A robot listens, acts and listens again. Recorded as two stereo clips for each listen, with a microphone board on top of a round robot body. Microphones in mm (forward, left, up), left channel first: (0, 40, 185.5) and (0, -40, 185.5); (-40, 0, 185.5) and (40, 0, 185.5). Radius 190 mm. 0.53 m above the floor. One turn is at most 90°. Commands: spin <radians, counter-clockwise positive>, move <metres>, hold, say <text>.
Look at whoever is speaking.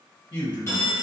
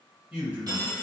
spin 1.22
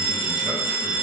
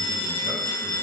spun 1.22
hold
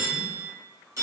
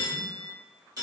hold
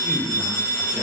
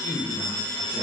say Found it: a man speaking, straight ahead.